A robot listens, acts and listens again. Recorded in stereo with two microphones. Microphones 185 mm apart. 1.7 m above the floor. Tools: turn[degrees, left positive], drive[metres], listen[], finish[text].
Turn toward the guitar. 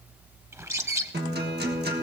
Thought: The guitar: about 65° right or 115° right.
Action: turn[-65]
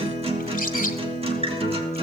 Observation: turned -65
Thought: So it is at 35° right.
Action: turn[-35]
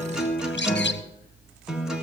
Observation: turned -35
Action: finish[Found it: a guitar, straight ahead.]